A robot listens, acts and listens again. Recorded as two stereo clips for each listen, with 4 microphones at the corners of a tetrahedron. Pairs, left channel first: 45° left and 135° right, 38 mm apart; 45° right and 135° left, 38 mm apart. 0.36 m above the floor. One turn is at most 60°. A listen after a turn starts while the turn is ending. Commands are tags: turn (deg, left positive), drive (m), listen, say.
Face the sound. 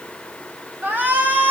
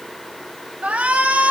<turn deg="-60"/>
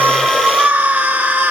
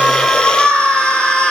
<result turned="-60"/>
<turn deg="-60"/>
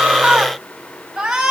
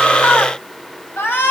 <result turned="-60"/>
<turn deg="-60"/>
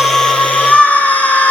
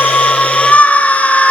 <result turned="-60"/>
<say>Facing the shout.</say>